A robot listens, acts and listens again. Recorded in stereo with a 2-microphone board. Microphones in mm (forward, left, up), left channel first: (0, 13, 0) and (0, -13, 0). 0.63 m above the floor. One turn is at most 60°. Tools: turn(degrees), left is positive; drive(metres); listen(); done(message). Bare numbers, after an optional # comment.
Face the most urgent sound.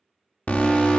# The alarm: about 70° left or 110° left.
turn(60)
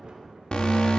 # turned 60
# So it is at 40° left.
turn(40)
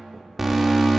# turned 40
done("Found it: an alarm, straight ahead.")